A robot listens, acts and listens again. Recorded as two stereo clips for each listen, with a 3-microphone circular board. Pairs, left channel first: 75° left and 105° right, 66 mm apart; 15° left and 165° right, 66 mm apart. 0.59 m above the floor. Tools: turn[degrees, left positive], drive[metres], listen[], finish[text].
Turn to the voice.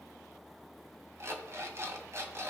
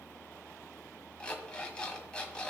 Action: listen[]
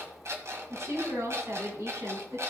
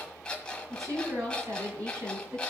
Thought: The woman speaking: 140° right.
Action: turn[-140]
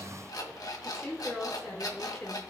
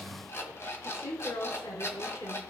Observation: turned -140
Thought: The woman speaking is now 15° right.
Action: turn[-15]
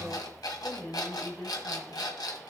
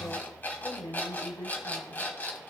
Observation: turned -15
Action: finish[Found it: a woman speaking, straight ahead.]